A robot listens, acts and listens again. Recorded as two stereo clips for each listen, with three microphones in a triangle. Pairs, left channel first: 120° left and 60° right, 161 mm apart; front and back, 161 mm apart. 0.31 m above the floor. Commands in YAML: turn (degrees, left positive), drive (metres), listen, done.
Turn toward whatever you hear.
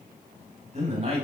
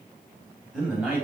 turn: -100
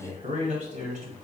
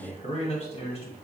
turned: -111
turn: -40
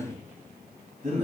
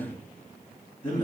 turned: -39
turn: -25
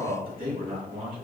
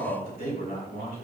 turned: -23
turn: -10
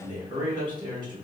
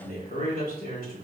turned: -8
done: "Found it: a man speaking, straight ahead."